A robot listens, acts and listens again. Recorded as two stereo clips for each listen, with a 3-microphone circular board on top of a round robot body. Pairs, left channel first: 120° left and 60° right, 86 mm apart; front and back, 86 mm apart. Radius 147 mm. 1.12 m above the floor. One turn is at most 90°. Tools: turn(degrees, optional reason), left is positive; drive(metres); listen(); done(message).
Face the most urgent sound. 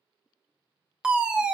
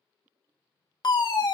turn(degrees=20, reason="The fire alarm: 20° left.")
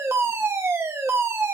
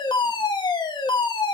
done("Found it: a fire alarm, straight ahead, 1 to 2 m away.")